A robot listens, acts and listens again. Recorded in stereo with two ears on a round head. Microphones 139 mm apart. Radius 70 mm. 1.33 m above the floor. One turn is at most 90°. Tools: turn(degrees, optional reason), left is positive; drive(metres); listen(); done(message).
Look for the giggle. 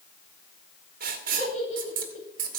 turn(degrees=45, reason="The giggle: about 45° left or 135° left.")
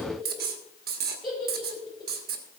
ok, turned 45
done("Found it: a giggle, straight ahead, over 4 m away.")